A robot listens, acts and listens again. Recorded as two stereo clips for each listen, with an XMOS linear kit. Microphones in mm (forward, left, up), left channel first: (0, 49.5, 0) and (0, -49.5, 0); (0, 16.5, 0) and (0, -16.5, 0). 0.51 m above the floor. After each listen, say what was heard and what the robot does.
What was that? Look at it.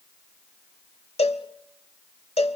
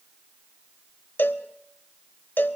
Turn 90° left.
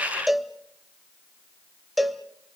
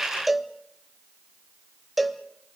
Facing the cowbell, 1 to 2 m away.